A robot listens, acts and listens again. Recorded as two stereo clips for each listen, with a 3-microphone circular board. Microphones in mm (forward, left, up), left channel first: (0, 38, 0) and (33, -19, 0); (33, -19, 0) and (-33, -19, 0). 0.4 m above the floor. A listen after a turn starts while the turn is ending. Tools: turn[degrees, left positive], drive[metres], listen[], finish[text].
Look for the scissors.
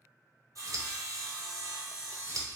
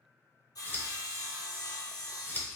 Thought: The scissors: 55° right.
Action: turn[-55]
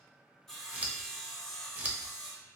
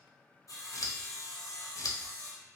Action: finish[Facing the scissors, under 1 m away.]